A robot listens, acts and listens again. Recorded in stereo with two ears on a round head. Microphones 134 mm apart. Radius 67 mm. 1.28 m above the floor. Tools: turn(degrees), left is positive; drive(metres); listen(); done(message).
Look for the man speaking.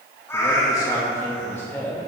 turn(degrees=15)
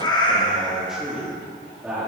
turn(degrees=-30)
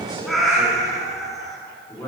turn(degrees=15)
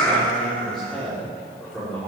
done("Facing the man speaking.")